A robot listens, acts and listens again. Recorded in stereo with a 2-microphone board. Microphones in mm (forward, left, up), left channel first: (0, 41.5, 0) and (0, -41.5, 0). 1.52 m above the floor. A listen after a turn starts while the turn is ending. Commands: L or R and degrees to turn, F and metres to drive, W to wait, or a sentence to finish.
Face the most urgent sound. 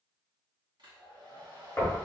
W
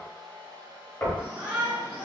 R15
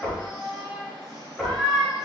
Facing the shout, 1 to 2 m away.